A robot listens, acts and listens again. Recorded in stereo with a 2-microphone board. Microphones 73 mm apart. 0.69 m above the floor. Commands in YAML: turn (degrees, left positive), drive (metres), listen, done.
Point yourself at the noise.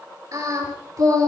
turn: -55
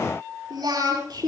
turn: -65
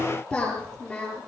turn: 20
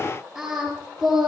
done: "Found it: singing, straight ahead."